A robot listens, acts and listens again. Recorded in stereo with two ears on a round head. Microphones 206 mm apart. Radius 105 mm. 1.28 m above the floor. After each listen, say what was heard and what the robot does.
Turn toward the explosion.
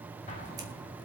The explosion: about 30° left or 150° left. Turn 30° left.
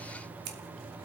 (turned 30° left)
Keep listening.
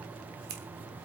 I heard an explosion, but can't make it out now. It was about straight ahead or 120° left.